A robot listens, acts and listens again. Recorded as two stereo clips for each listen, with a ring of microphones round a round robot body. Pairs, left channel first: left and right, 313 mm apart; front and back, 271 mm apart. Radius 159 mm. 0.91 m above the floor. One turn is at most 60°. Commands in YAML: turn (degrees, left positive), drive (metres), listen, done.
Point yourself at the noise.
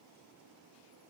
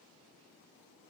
listen: true
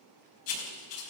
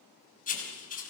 turn: 60
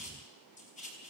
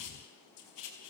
turn: 20
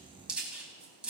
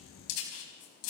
done: "Found it: writing, straight ahead."